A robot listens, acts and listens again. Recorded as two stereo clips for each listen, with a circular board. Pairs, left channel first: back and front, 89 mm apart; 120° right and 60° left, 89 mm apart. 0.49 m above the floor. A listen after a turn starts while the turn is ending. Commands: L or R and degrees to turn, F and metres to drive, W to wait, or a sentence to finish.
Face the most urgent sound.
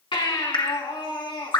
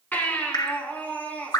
L170
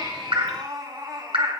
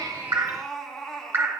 R35
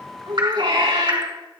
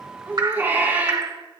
Facing the baby crying.